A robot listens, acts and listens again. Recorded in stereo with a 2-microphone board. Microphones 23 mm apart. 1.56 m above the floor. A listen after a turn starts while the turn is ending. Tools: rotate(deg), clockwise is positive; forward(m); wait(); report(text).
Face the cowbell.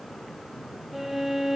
wait()
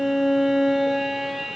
wait()
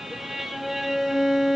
report("I can't make out a cowbell, only a violin.")